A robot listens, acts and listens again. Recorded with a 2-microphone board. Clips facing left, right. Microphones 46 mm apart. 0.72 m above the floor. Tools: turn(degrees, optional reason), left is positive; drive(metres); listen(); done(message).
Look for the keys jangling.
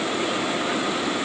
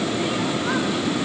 listen()
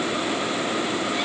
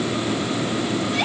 listen()
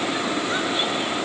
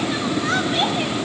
done("I can't make out keys jangling.")